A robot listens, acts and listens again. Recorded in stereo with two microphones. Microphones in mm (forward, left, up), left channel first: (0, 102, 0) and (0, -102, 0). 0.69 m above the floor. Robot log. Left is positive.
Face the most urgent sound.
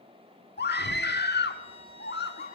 note: The scream: about 55° left or 125° left.
cmd yaw +55
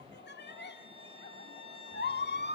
note: So it is at 65° left.
cmd yaw +65
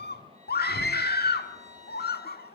note: The scream is now 55° left.
cmd yaw +55
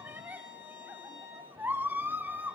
note: The scream is now 10° right.
cmd yaw -10
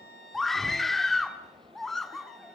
end: Facing the scream, 1 to 2 m away.